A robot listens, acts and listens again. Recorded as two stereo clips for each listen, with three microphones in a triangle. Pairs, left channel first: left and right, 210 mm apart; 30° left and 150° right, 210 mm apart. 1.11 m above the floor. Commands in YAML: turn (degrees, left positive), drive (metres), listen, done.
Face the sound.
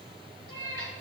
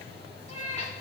turn: 85
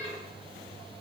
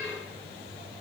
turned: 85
listen: true
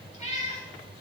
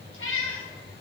turn: 35
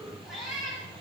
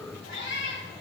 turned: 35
done: "Found it: a cat meowing, straight ahead, 2 to 4 m away."